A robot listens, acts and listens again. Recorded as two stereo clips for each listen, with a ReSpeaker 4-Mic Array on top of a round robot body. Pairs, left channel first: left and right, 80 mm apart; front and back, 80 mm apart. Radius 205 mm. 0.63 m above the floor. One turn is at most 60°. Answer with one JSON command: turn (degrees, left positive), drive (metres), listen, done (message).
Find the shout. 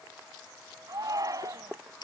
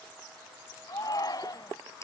{"turn": -40}
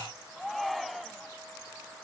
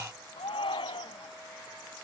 {"done": "Found it: a shout, straight ahead."}